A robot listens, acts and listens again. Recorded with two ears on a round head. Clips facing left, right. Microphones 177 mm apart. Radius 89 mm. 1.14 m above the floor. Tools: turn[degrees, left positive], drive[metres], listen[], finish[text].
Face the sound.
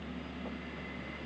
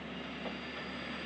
Action: listen[]
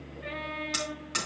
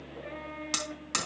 Thought: The hammering: about 65° right or 115° right.
Action: turn[-65]
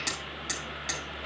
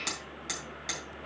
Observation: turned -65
Action: finish[Facing the hammering.]